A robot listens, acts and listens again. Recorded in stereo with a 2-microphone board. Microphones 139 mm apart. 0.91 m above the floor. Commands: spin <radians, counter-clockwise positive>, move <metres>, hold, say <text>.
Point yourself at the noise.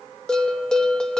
spin 0.52
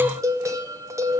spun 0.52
spin -0.44
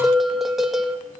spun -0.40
say Facing the bell, 1 to 2 m away.